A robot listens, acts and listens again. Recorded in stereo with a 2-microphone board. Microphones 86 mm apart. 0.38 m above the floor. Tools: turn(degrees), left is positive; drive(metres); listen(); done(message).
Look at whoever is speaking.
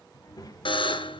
turn(degrees=45)
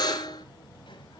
turn(degrees=90)
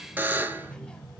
turn(degrees=10)
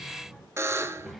done("Found it: a child speaking, straight ahead.")